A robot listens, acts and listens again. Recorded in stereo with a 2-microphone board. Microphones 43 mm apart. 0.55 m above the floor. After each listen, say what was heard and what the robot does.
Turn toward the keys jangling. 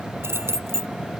Turn 90° right.
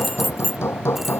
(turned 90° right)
Facing the keys jangling.